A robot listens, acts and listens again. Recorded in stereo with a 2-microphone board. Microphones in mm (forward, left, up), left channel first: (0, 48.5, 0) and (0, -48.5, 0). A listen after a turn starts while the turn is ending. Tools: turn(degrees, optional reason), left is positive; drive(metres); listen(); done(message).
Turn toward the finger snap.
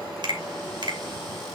turn(degrees=-55, reason="The finger snap: about 55° right or 125° right.")
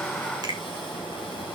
listen()
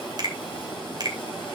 turn(degrees=-55, reason="So it is at 55° right.")
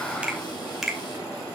done("Facing the finger snap, 2 to 4 m away.")